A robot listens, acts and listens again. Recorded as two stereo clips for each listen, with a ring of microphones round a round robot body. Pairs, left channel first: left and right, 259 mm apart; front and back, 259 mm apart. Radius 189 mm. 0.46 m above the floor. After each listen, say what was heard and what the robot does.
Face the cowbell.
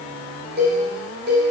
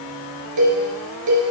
The cowbell: 155° right. Turn 155° right.
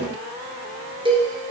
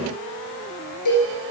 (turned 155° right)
The cowbell is now 20° right. Turn 20° right.
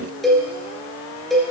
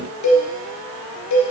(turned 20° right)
Facing the cowbell, 2 to 4 m away.